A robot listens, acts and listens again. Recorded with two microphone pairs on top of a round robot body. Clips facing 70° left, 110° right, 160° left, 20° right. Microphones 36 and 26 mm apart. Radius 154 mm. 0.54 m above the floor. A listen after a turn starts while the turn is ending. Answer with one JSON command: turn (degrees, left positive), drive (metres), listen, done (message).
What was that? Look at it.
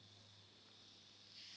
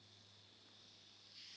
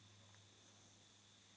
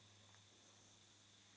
{"listen": true}
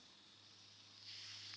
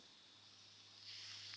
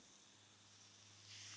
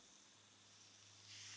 {"listen": true}
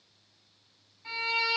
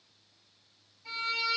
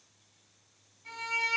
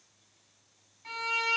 {"turn": 40}
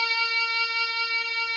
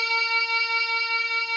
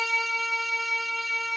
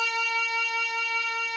{"done": "Found it: a violin, straight ahead, 1 to 2 m away."}